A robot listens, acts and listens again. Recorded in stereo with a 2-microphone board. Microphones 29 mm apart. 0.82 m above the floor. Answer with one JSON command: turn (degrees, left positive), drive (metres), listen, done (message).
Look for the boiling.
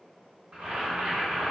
{"turn": -75}
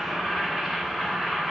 {"turn": -10}
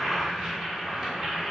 {"done": "Facing the boiling."}